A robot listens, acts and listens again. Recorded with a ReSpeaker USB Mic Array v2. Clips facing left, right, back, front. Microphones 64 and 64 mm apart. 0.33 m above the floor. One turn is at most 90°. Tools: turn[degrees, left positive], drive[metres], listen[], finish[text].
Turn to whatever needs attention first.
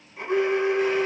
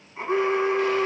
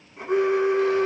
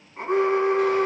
Thought: The alarm: 30° right.
Action: turn[-30]
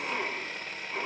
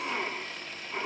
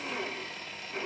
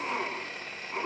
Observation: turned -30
Action: finish[Facing the alarm, 2 to 4 m away.]